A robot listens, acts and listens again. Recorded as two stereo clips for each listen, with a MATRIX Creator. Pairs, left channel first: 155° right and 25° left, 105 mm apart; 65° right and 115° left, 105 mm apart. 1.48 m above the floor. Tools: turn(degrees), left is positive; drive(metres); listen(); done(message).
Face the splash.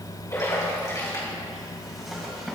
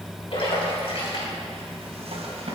turn(degrees=-100)
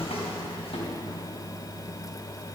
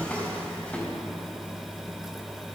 done("I heard a splash from this way, but can't make it out now.")